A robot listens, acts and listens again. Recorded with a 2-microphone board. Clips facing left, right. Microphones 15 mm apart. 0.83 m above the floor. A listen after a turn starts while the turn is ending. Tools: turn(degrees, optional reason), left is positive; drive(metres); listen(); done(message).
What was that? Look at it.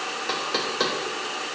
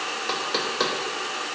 turn(degrees=-30)
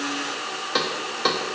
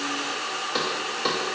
turn(degrees=20, reason="So it is at 20° left.")
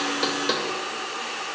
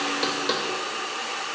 done("Facing the knocking, 1 to 2 m away.")